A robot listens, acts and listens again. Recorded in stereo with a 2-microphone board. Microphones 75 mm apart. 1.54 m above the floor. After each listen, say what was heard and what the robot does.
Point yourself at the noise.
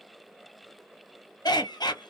The laughter: about 65° left or 115° left. Turn 65° left.
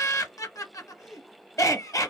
So it is at 45° left. Turn 45° left.
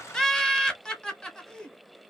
The laughter is now 10° left. Turn 10° left.
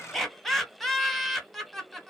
Found it: laughter, straight ahead.